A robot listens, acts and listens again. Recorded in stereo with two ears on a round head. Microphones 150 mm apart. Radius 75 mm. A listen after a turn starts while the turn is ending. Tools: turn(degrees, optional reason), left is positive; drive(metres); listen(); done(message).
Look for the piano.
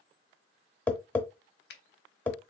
listen()
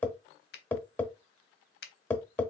listen()
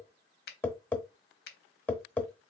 done("I can't make out a piano to turn to.")